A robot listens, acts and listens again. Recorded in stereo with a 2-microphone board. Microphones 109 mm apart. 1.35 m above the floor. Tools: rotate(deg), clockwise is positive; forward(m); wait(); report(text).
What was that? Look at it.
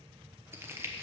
rotate(25)
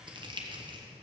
rotate(125)
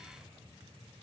wait()
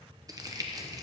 rotate(40)
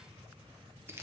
rotate(25)
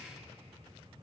wait()
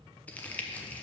rotate(-15)
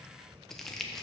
report("Facing the crumpling.")